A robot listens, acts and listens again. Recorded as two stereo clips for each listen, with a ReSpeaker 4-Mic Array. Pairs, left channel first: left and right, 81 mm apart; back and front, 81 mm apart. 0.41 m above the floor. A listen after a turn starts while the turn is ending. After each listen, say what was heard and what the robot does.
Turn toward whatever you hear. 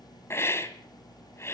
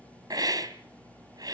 The hiss: 35° left. Turn 35° left.
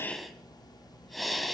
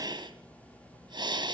Facing the hiss, 2 to 4 m away.